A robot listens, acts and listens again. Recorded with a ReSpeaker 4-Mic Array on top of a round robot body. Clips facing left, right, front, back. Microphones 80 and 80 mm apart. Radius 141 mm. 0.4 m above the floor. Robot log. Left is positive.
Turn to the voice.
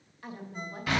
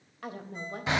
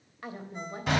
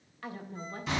note: The woman speaking: 70° right.
cmd yaw -70
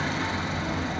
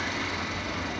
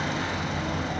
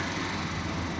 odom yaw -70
cmd idle
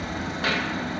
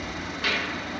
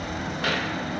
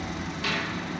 cmd idle
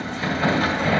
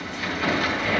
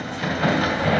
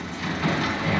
end: I heard a woman speaking from this way, but can't make it out now.